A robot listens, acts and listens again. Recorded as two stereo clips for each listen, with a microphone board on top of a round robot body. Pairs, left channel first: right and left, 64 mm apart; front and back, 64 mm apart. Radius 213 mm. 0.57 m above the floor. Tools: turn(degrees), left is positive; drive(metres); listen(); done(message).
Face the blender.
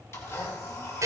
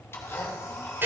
turn(degrees=-50)
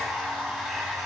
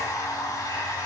done("Facing the blender.")